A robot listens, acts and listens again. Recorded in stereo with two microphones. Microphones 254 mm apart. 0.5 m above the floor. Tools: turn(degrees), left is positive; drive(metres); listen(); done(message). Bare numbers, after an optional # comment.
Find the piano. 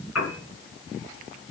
turn(90)
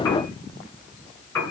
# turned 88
# So it is at 10° left.
turn(10)
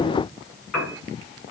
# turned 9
done("Found it: a piano, straight ahead.")